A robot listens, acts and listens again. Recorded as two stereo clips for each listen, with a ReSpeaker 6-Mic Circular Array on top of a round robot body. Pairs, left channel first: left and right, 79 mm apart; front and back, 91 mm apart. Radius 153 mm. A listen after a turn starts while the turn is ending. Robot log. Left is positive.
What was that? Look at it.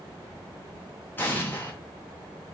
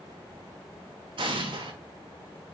note: The explosion: 155° left.
cmd yaw +155
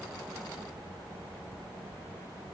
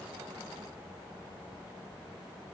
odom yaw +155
end: I heard an explosion from this way, but can't make it out now.